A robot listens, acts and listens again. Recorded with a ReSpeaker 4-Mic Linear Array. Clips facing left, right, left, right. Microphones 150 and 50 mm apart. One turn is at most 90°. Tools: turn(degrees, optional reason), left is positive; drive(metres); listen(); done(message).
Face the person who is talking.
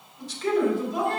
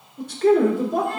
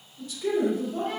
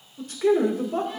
turn(degrees=-55, reason="The man speaking: about 55° right or 125° right.")
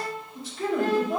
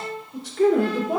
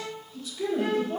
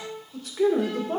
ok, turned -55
turn(degrees=-70, reason="So it is at 70° right.")
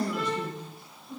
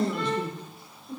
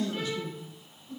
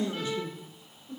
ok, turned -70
turn(degrees=-30, reason="The man speaking is now 30° right.")
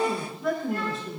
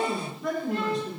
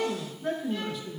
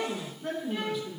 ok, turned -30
done("Found it: a man speaking, straight ahead, 2 to 4 m away.")